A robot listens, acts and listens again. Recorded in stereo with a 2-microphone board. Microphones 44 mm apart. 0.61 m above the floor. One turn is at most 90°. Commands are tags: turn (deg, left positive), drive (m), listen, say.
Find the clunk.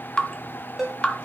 <listen/>
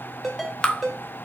<listen/>
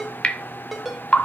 <say>I can't make out a clunk to turn to.</say>